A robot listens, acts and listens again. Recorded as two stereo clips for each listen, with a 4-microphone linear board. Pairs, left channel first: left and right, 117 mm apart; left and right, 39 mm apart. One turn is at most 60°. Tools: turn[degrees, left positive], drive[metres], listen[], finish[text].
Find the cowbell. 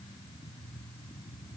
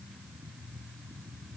Action: listen[]
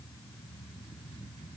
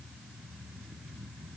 Action: listen[]
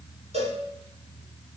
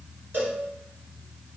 Thought: The cowbell: about 75° right or 105° right.
Action: turn[-60]
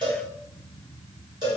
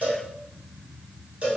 Thought: So it is at 40° right.
Action: turn[-40]
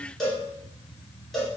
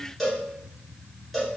Action: finish[Facing the cowbell, 1 to 2 m away.]